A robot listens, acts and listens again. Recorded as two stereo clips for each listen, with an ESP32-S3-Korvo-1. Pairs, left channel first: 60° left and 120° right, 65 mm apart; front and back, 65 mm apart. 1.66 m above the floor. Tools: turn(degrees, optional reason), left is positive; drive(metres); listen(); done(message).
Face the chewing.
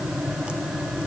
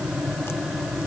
listen()
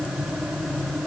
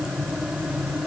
listen()
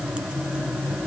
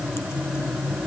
done("I can't make out chewing to turn to.")